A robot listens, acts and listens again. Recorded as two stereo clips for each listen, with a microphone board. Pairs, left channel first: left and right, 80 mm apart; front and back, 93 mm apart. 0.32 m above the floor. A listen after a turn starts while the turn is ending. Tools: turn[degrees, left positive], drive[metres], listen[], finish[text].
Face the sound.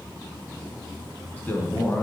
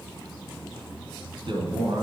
Thought: The man speaking: 155° left.
Action: turn[155]
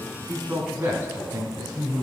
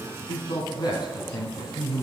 Thought: The man speaking is now 40° right.
Action: turn[-40]
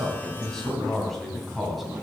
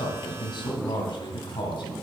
Action: finish[Found it: a man speaking, straight ahead, 2 to 4 m away.]